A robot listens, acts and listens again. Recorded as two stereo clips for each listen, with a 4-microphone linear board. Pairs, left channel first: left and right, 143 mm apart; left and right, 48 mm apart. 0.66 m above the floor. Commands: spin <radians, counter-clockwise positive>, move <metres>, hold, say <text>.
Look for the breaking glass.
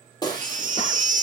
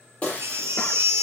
spin 0.52
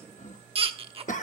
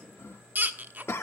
hold
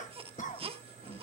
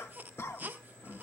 say I heard breaking glass, but can't make it out now. It was about straight ahead or 120° left.